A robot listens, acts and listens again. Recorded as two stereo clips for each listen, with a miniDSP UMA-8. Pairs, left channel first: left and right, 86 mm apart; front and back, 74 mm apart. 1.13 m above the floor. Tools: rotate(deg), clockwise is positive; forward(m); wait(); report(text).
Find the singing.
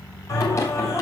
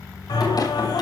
rotate(-35)
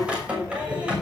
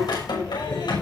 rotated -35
rotate(15)
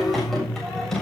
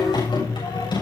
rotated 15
report("Facing the singing, over 4 m away.")